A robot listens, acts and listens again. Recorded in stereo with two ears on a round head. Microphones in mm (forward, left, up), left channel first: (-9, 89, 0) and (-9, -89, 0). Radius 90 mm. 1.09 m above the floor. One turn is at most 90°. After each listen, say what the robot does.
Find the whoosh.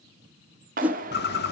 Turn 30° right.
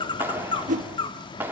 Turn 90° right.
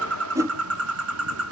Turn 15° right.
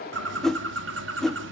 Facing the whoosh.